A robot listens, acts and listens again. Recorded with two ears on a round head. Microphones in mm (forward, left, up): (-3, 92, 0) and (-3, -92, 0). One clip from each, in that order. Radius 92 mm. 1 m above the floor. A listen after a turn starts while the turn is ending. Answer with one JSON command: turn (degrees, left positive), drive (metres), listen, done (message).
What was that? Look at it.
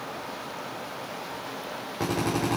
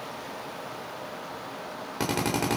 {"turn": -90}
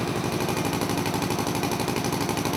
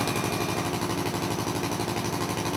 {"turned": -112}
{"turn": 15}
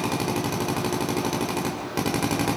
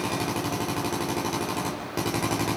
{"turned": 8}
{"done": "Found it: a drill, straight ahead."}